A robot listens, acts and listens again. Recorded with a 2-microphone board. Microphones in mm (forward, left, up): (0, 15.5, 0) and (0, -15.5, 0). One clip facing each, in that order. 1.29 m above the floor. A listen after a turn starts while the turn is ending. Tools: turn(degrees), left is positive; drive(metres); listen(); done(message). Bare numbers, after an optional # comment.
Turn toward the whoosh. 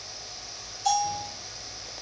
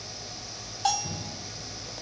listen()
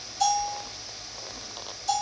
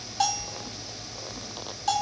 listen()
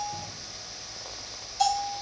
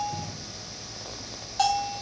done("I can't make out a whoosh to turn to.")